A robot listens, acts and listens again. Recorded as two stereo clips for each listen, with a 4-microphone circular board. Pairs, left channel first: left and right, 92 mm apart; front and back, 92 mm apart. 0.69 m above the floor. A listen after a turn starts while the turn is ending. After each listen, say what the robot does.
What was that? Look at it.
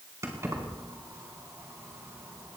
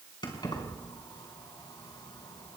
Turn 35° right.
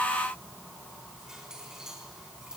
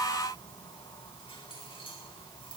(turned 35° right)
Found it: keys jangling, straight ahead, 2 to 4 m away.